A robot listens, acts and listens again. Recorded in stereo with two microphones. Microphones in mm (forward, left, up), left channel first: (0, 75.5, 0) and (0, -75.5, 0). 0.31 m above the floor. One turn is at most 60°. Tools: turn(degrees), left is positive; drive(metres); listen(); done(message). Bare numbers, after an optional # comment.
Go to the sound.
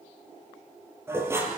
# The dishes clattering: about 15° right or 165° right.
turn(-15)
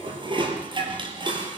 # So it is at 145° right.
turn(-60)
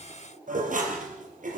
# The dishes clattering is now 110° right.
turn(-60)
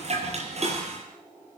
# The dishes clattering is now 50° right.
turn(-50)
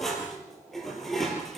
drive(1.0)
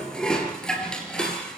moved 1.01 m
drive(1.0)
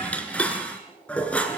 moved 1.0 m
# The dishes clattering is now 10° left.
turn(10)
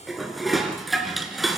drive(1.0)
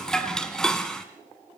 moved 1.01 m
drive(1.0)
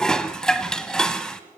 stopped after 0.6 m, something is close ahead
done("Arrived at the dishes clattering, straight ahead.")